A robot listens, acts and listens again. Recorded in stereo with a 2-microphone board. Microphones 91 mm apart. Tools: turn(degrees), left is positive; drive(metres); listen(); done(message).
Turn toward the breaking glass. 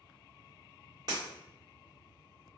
turn(degrees=-50)
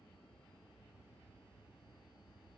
listen()
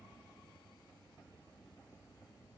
done("I heard breaking glass, but can't make it out now. It was about straight ahead or 80° right.")